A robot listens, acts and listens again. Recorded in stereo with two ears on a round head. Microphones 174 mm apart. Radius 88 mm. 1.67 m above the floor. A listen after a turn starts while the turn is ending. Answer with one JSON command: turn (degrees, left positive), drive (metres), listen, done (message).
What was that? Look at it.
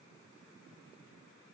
{"listen": true}
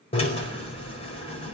{"turn": 30}
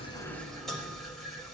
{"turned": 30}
{"done": "Facing the drill."}